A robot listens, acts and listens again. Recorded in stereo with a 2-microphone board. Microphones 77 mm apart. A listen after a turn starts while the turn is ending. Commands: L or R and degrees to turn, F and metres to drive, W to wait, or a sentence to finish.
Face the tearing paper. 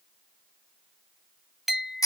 W
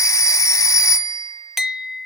W
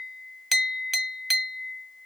I can't make out tearing paper, only a phone ringing and a clink.